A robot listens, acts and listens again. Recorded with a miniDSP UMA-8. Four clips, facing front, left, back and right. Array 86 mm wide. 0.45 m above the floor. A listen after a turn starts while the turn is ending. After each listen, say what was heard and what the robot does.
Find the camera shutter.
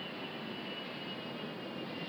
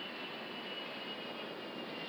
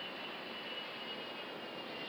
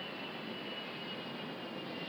Keep listening.
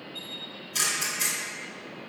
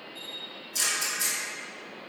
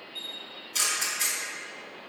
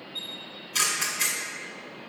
The camera shutter: 95° right. Turn 95° right.
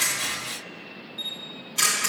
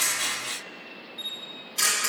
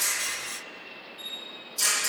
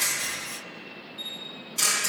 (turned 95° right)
Facing the camera shutter.